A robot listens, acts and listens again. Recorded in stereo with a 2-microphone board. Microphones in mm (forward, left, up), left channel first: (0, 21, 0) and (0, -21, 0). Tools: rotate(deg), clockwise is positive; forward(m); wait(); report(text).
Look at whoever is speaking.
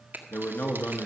rotate(-55)
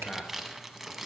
rotate(-10)
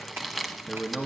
report("Found it: a man speaking, straight ahead, 1 to 2 m away.")